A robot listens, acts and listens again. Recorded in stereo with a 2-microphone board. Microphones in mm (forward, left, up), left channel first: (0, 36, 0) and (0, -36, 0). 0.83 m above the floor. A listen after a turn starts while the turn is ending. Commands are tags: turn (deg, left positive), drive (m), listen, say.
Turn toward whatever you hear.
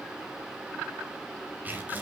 <turn deg="-20"/>
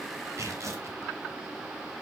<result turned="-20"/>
<turn deg="-135"/>
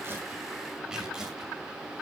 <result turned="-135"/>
<turn deg="-10"/>
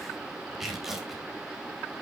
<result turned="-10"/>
<say>Found it: tearing paper, straight ahead, over 4 m away.</say>